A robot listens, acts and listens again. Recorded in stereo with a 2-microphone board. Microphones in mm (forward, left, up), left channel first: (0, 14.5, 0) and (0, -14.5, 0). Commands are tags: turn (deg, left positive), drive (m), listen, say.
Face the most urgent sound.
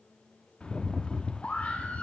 <turn deg="50"/>
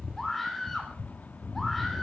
<turn deg="10"/>
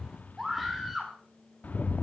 <say>Facing the scream, 2 to 4 m away.</say>